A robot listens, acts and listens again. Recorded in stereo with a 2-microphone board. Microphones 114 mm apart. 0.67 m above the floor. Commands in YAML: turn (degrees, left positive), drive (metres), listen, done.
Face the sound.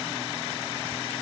listen: true
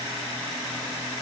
listen: true
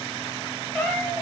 turn: 30
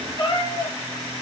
turn: 135
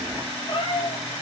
turn: 45
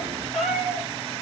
done: "Found it: a cat meowing, straight ahead, over 4 m away."